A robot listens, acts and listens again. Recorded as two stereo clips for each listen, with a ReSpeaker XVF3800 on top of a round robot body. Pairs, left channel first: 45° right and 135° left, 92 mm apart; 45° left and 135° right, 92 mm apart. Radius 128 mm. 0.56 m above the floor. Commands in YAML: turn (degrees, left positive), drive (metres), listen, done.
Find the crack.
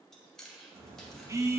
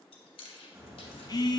turn: 165
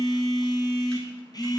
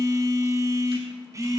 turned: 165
done: "Facing where the crack came from. I can't hear it now."